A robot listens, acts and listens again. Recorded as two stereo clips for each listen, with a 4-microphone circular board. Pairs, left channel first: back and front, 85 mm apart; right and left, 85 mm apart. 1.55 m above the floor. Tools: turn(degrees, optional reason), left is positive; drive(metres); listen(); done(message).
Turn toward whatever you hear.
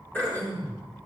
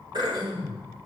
turn(degrees=110, reason="The throat clearing: 110° left.")
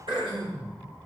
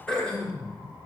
turn(degrees=-15, reason="The throat clearing is now 15° right.")
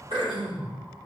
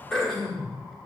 done("Facing the throat clearing.")